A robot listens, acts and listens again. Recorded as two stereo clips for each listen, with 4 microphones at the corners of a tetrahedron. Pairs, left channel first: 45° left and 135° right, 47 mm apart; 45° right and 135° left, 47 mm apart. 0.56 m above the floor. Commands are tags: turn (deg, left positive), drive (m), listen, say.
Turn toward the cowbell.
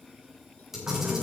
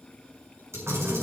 <listen/>
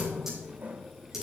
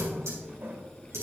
<listen/>
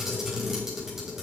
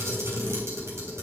<say>I can't make out a cowbell, only a camera shutter and a running tap.</say>